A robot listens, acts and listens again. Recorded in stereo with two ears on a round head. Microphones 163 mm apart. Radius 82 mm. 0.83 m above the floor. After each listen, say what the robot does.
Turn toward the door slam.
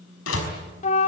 Turn 90° left.
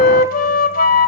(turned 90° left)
Facing where the door slam came from. I can't hear it now.